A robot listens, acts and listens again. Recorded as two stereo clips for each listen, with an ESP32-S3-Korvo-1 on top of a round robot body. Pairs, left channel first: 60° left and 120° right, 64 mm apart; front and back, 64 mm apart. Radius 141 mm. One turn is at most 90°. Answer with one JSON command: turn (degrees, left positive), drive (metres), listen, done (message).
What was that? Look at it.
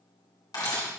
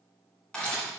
{"turn": 75}
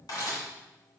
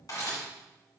{"turn": 35}
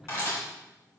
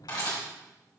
{"turn": 10}
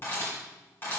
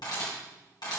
{"done": "Facing the camera shutter, 2 to 4 m away."}